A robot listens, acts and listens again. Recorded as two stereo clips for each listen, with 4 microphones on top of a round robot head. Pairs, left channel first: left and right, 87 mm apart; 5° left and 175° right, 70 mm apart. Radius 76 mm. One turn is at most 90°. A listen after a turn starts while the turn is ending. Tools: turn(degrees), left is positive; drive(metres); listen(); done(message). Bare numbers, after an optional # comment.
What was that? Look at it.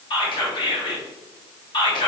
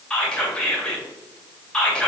# The whispering: 80° left.
turn(80)
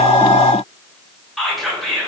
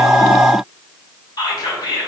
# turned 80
done("Facing the whispering, 1 to 2 m away.")